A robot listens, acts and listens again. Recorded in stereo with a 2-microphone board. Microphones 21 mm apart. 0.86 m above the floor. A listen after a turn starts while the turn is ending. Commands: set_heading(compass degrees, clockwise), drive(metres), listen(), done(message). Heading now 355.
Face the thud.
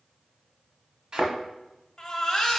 set_heading(35)
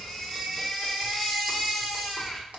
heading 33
listen()
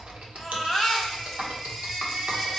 done("I heard a thud, but can't make it out now. It was about straight ahead or 100° right.")